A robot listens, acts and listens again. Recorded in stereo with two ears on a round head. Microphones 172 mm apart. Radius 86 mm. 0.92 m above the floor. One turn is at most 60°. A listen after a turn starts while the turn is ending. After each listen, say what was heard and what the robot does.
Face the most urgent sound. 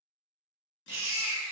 The baby crying: about 15° right or 165° right. Turn 15° right.
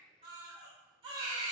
So it is at 150° right. Turn 60° right.
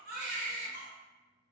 The baby crying is now 100° right. Turn 60° right.
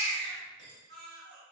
The baby crying is now 60° right. Turn 60° right.
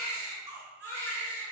The baby crying is now 15° right. Turn 15° right.
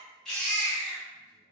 Found it: a baby crying, straight ahead, 1 to 2 m away.